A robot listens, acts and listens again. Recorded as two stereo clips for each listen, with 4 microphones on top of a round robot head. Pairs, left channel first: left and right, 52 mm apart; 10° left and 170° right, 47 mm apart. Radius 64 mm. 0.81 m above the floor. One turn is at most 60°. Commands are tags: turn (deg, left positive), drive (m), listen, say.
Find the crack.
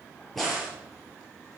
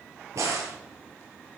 <turn deg="60"/>
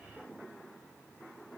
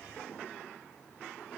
<turn deg="60"/>
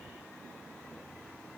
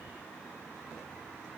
<turn deg="55"/>
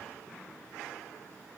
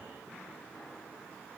<say>Facing where the crack came from. I can't hear it now.</say>